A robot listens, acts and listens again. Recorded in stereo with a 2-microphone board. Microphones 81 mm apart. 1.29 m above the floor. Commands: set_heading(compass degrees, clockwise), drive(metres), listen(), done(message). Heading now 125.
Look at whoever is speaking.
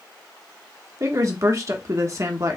set_heading(165)
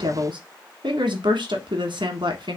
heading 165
set_heading(265)
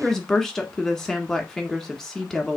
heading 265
done("Facing the woman speaking.")